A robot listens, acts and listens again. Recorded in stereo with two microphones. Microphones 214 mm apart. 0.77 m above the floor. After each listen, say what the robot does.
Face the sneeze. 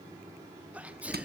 Turn 30° right.
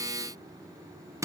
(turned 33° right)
Keep listening.
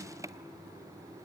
I heard a sneeze, but can't make it out now. It was about 25° left or 140° right.